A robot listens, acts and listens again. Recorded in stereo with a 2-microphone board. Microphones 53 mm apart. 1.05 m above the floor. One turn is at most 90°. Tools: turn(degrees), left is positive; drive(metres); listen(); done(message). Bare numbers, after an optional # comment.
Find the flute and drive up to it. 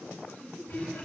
listen()
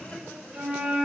turn(-30)
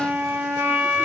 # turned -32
# So it is at 135° right.
turn(-90)
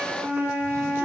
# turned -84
# The flute is now 50° right.
turn(-50)
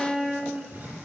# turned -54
drive(1.0)
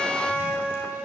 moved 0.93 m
drive(1.0)
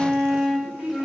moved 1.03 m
drive(1.0)
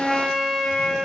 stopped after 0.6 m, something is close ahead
done("Arrived at the flute, straight ahead.")